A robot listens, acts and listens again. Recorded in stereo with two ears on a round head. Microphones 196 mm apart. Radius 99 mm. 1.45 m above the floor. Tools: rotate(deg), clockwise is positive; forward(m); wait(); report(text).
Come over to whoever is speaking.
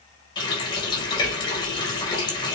rotate(30)
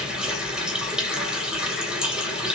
rotate(140)
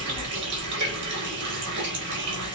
rotate(45)
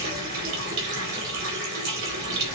rotate(25)
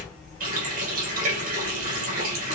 forward(1.0)
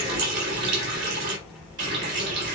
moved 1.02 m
forward(1.0)
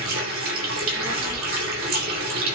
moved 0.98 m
forward(1.0)
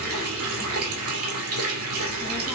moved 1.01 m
forward(1.0)
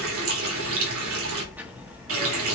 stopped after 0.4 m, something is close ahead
rotate(10)
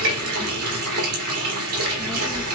report("Arrived at the child speaking, straight ahead.")